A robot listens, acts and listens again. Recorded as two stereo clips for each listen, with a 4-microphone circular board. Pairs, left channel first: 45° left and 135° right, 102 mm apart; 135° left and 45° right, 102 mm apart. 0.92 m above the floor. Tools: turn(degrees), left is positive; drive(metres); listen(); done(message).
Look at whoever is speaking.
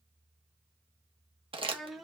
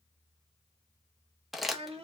turn(degrees=-45)
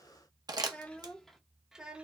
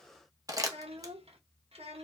turn(degrees=-55)
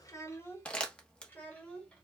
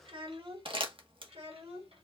turn(degrees=-35)
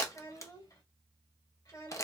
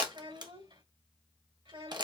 turn(degrees=-10)
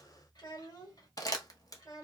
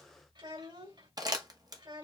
done("Facing the child speaking.")